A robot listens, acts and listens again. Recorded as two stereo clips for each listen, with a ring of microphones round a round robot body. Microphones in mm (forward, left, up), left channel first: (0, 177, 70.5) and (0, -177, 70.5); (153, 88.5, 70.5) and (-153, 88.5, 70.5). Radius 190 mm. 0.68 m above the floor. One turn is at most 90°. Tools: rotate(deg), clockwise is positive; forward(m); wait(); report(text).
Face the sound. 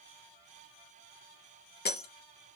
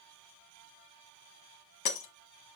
rotate(-25)
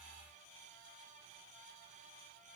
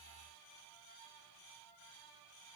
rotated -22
report("Facing where the breaking glass came from. I can't hear it now.")